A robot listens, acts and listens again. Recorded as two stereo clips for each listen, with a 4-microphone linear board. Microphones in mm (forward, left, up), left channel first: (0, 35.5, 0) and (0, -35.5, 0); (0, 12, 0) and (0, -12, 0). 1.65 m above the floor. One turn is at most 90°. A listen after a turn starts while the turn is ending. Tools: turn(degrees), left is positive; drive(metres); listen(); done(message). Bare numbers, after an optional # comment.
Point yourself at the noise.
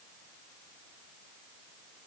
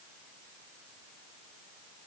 listen()
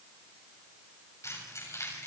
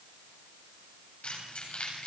# The keys jangling: about 45° left or 135° left.
turn(45)
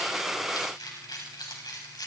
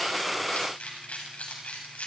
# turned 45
# So it is at 85° left.
turn(85)
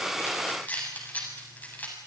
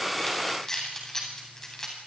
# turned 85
# The keys jangling is now 25° left.
turn(25)
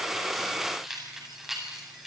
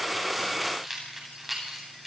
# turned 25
done("Facing the keys jangling, over 4 m away.")